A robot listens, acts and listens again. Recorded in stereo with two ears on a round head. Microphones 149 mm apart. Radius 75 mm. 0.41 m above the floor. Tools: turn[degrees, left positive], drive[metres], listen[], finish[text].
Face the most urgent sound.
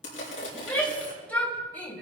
Action: turn[30]
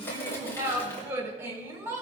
Thought: So it is at 20° right.
Action: turn[-20]
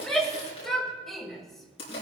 Action: finish[Found it: a shout, straight ahead.]